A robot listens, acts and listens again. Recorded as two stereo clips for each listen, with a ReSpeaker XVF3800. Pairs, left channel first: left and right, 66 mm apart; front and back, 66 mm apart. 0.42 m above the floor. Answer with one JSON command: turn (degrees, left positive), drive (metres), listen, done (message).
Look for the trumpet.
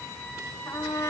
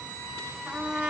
{"turn": 100}
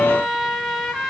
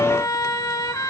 {"done": "Found it: a trumpet, straight ahead, over 4 m away."}